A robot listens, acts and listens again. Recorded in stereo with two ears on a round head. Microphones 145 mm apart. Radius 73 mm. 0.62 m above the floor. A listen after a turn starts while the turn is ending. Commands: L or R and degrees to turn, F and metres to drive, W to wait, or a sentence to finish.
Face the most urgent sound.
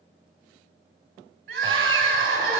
R75
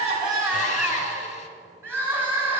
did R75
R15
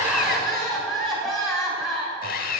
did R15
Facing the crying, 2 to 4 m away.